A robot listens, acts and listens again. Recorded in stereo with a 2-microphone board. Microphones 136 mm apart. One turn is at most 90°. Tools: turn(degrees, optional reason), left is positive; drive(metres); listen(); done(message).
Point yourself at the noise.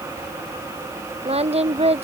turn(degrees=-50, reason="The singing: about 50° right or 130° right.")
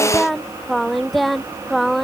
done("Facing the singing.")